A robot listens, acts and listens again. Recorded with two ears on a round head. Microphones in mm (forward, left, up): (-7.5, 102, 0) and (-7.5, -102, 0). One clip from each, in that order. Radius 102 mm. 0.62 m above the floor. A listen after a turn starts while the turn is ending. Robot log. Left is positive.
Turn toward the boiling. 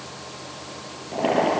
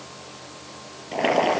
note: The boiling: about 60° right or 120° right.
cmd yaw -60
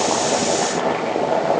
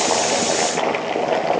note: So it is at 60° right.
cmd yaw -60
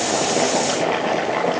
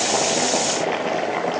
end: Found it: boiling, straight ahead, 2 to 4 m away.